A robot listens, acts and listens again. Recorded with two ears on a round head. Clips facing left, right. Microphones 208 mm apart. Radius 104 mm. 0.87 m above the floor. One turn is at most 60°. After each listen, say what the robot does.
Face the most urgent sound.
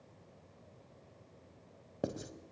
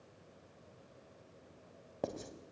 Keep listening.
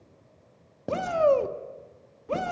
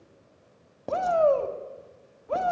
Turn 35° left.
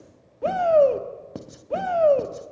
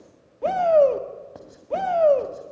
Facing the shout.